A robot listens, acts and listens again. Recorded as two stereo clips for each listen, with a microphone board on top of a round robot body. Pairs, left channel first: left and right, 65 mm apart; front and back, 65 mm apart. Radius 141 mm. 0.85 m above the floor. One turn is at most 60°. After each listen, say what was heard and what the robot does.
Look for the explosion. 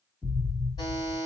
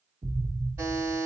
The explosion: 145° left. Turn 60° left.
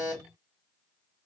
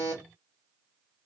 Nothing new. It was at 85° left. Turn 60° left.
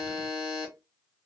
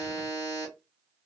Nothing new. It was at 25° left. Turn 25° left.
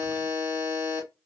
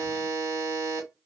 Facing where the explosion came from. I can't hear it now.